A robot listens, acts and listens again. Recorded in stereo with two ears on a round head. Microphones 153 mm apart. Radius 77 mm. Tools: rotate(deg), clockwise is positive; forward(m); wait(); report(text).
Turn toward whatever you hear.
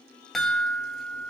rotate(-30)
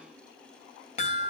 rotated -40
rotate(-140)
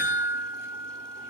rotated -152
rotate(15)
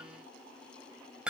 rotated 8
report("Facing the chime.")